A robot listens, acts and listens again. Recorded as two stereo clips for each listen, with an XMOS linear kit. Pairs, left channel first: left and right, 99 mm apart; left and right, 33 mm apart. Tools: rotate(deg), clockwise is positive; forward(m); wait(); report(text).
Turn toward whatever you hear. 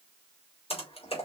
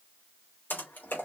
rotate(-75)
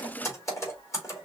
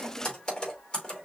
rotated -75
rotate(-30)
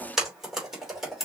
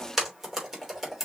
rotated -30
report("Facing the typing on a keyboard, 2 to 4 m away.")